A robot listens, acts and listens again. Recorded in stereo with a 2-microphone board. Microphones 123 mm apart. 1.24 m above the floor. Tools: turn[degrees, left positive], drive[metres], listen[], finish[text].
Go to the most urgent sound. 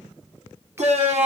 Thought: The shout: about 65° right or 115° right.
Action: turn[-65]
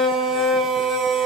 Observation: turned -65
Action: drive[1.0]
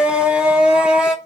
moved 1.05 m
Thought: The shout is now 10° right.
Action: turn[-10]
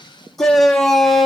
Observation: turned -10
Action: drive[1.0]
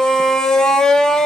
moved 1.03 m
Action: drive[1.0]
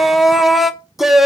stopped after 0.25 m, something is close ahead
Action: finish[Arrived at the shout, straight ahead.]